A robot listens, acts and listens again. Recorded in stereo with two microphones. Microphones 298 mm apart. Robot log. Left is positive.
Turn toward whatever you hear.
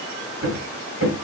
note: The hammering: about 50° right or 130° right.
cmd yaw -50
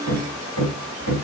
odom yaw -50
note: So it is at 80° right.
cmd yaw -80
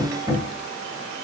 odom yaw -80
note: The hammering is now 15° right.
cmd yaw -15
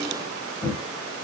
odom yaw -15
end: Facing the hammering, 1 to 2 m away.